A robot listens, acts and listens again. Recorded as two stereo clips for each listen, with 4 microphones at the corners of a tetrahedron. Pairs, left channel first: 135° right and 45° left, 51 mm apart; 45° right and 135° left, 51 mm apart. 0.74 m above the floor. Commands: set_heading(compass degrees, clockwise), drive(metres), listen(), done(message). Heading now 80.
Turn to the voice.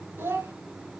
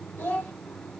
set_heading(70)
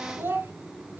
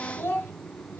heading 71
done("Found it: a child speaking, straight ahead, 2 to 4 m away.")